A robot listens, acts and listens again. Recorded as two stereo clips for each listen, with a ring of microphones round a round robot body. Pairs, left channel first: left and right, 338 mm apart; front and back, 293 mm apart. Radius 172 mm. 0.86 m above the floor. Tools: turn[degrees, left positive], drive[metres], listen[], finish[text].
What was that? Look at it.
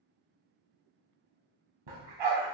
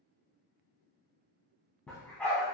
Thought: The dog barking: 85° right.
Action: turn[-85]
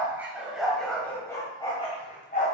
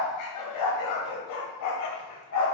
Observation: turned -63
Thought: The dog barking is now 25° left.
Action: turn[25]
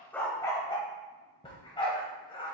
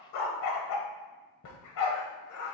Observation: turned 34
Thought: The dog barking is now 15° left.
Action: turn[15]
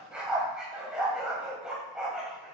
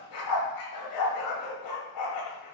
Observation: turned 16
Action: finish[Found it: a dog barking, straight ahead, 1 to 2 m away.]